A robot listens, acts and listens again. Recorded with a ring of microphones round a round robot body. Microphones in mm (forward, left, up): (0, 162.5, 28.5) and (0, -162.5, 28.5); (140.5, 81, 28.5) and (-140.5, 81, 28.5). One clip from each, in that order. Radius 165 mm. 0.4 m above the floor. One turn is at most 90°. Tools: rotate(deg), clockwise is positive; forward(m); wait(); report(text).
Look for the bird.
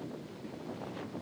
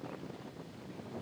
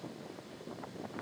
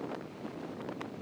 wait()
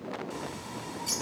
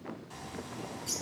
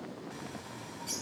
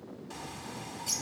rotate(-90)
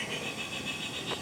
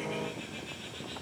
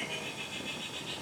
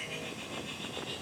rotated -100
rotate(-75)
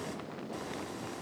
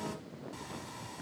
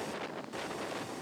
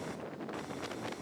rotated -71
wait()
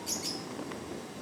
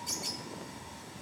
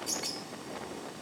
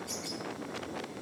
report("Facing the bird.")